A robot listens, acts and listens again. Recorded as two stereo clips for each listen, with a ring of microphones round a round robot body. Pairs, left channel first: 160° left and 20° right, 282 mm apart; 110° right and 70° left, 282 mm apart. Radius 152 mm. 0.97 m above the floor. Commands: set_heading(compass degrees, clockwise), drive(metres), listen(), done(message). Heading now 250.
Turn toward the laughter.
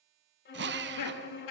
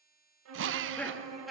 set_heading(95)
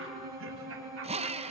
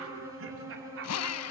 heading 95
set_heading(75)
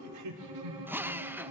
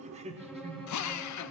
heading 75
done("Facing the laughter.")